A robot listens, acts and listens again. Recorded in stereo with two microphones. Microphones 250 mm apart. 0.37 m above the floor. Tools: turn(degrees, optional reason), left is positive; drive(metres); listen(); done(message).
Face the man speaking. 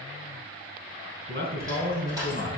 turn(degrees=-40, reason="The man speaking: about 40° right or 140° right.")
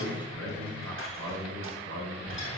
turn(degrees=-110, reason="So it is at 110° right.")
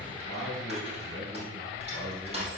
done("Found it: a man speaking, straight ahead, over 4 m away.")